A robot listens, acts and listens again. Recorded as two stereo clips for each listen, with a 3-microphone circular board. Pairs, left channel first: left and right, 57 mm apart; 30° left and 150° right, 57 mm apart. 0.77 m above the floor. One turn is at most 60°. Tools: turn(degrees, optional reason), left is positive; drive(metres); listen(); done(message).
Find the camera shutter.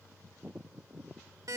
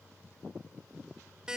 listen()
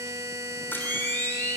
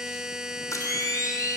turn(degrees=40, reason="The camera shutter: 40° left.")
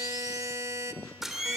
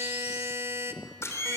done("Found it: a camera shutter, straight ahead, 2 to 4 m away.")